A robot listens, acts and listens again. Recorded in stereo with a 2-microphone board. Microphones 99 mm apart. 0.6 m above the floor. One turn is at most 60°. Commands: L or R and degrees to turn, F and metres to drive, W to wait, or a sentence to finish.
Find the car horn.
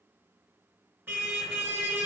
R20
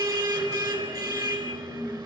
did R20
R60
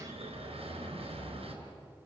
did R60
R60
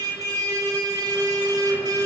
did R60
R35
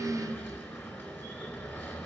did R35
L20
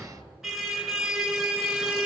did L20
Facing the car horn, over 4 m away.